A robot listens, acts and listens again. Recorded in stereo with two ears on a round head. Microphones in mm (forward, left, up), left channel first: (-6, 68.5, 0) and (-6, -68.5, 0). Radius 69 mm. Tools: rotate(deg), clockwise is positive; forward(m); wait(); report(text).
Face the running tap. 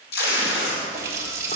rotate(20)
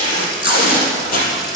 report("Facing the running tap, 2 to 4 m away.")